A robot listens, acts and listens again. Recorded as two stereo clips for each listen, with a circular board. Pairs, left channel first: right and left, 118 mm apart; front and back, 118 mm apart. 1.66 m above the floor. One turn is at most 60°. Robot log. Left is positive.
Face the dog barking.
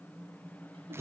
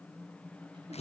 cmd idle
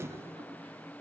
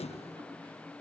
cmd idle
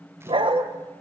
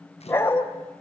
note: The dog barking: 65° left.
cmd yaw +60
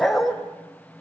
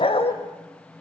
end: Found it: a dog barking, straight ahead, 2 to 4 m away.